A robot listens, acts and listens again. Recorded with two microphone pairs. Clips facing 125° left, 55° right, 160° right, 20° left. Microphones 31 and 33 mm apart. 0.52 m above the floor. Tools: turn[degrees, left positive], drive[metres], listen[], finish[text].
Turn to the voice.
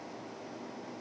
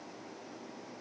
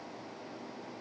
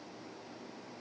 Action: listen[]
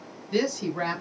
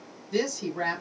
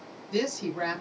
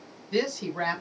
Thought: The woman speaking: 70° left.
Action: turn[70]
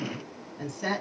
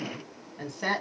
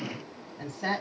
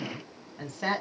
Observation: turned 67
Action: finish[Facing the woman speaking.]